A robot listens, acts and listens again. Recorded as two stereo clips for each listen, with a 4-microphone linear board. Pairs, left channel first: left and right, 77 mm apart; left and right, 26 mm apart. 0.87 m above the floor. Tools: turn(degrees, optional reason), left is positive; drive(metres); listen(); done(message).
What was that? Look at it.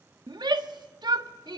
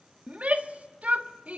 turn(degrees=-70, reason="The shout: about 70° right or 110° right.")
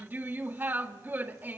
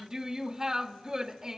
turn(degrees=-25, reason="So it is at 25° right.")
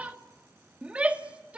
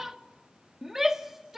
turn(degrees=-20, reason="The shout is now 20° right.")
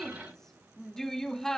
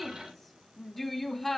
done("Facing the shout.")